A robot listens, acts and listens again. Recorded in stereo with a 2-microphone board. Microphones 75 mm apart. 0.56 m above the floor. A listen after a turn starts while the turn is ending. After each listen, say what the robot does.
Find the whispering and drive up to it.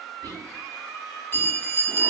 Turn 70° right.
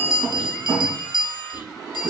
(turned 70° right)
Turn 20° right.
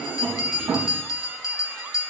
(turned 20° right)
Keep listening.
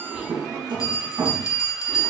Drive 1.0 m forward.
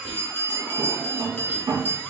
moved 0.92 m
Drive 1.0 m forward.
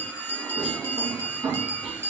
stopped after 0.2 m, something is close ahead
Arrived at the whispering, straight ahead.